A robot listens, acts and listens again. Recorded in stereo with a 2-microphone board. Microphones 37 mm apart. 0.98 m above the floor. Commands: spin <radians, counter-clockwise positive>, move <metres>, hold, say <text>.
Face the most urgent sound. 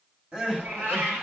spin -0.44
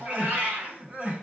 spin -2.27
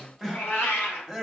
say Found it: crying, straight ahead.